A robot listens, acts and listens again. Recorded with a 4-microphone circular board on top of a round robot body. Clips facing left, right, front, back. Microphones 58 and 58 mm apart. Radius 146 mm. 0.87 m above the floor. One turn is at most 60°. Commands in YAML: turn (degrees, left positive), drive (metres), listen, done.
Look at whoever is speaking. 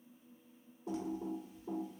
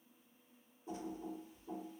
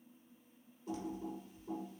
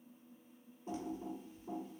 listen: true
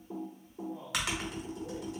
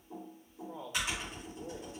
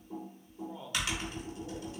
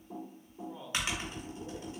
turn: -60
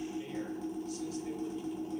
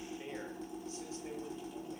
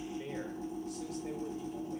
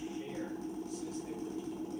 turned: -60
turn: -30
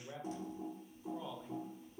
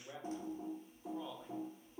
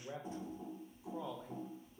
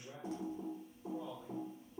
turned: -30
done: "Facing the man speaking, under 1 m away."